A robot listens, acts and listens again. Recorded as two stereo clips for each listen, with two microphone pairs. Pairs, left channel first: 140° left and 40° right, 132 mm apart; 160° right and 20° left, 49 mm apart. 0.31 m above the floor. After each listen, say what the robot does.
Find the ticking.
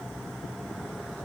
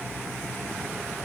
Keep listening.
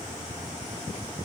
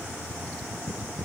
Keep listening.
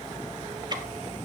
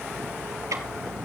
Turn 15° left.
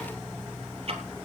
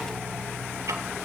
Facing the ticking, 2 to 4 m away.